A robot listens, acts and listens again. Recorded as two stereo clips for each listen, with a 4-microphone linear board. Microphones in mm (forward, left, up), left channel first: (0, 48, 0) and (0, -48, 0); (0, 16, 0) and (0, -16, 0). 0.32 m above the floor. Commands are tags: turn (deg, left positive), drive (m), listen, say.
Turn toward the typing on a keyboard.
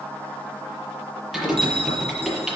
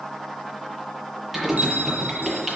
<turn deg="30"/>
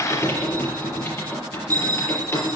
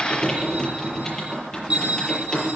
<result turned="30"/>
<turn deg="150"/>
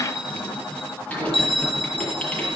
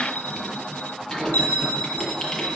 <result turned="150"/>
<turn deg="15"/>
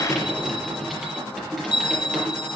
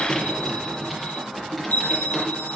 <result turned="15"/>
<say>Facing the typing on a keyboard, over 4 m away.</say>